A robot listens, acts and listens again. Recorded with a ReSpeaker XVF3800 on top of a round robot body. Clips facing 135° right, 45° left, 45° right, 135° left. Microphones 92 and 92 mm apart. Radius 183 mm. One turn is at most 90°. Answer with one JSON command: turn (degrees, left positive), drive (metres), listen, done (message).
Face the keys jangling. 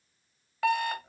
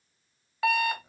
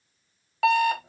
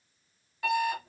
{"listen": true}
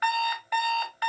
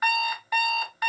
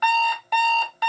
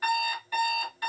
{"listen": true}
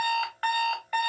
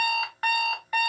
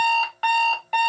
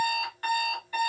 {"done": "I can't make out keys jangling to turn to."}